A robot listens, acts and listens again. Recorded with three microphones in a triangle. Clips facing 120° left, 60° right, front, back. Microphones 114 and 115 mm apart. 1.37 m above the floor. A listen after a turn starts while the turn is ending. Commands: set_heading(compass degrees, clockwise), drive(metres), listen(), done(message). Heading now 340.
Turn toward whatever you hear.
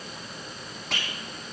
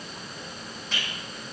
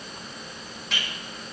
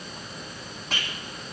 set_heading(205)
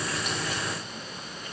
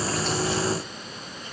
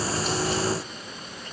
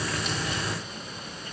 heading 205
listen()
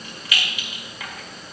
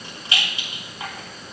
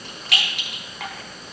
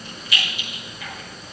done("Found it: a rattle, straight ahead.")